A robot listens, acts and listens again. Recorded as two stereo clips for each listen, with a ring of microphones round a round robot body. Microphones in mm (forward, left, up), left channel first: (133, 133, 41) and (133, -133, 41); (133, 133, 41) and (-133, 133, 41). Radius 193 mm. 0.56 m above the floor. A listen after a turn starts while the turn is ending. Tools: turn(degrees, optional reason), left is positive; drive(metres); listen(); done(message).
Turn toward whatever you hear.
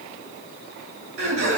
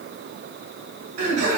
turn(degrees=-140, reason="The laughter: 140° right.")
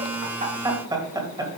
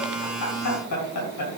turn(degrees=-15, reason="The laughter is now 15° right.")
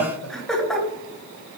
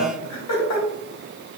done("Found it: laughter, straight ahead, 2 to 4 m away.")